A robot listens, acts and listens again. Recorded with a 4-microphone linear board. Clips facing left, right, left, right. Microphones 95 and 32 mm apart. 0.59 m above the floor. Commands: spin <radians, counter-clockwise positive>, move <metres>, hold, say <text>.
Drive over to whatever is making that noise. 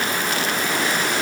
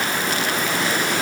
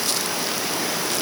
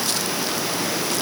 hold
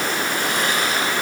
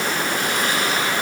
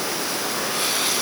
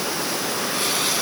hold
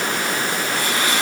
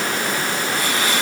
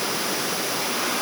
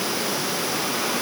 say I can't make out anything to turn to.